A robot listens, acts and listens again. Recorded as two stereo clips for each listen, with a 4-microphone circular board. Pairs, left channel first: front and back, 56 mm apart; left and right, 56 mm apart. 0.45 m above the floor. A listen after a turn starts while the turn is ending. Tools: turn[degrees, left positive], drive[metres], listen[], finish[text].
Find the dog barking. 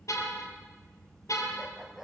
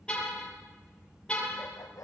Thought: The dog barking: 95° left.
Action: turn[95]
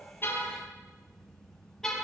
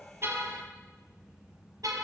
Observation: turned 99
Action: listen[]
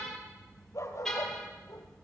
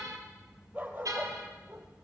Thought: The dog barking is now 40° right.
Action: turn[-40]
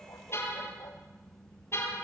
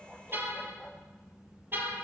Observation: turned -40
Action: finish[Facing the dog barking, 2 to 4 m away.]